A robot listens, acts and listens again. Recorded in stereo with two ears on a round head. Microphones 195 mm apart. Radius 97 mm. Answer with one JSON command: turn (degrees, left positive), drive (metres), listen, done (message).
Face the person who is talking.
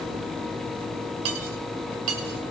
{"listen": true}
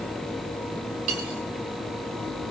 {"listen": true}
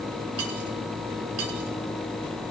{"done": "I can't make out anyone speaking to turn to."}